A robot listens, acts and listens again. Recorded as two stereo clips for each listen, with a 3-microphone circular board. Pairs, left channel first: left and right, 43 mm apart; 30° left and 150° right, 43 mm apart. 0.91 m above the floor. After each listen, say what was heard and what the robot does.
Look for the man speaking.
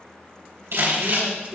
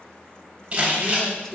The man speaking: 45° right. Turn 45° right.
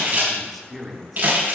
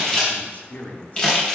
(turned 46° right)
Facing the man speaking, 1 to 2 m away.